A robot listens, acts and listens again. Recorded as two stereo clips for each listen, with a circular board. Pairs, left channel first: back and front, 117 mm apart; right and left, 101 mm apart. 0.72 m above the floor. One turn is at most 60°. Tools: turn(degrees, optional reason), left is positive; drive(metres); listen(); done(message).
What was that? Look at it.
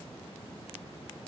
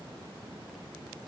listen()
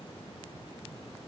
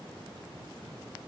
listen()
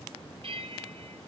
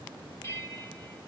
turn(degrees=-30, reason="The bell: 30° right.")
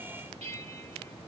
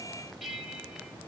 done("Found it: a bell, straight ahead.")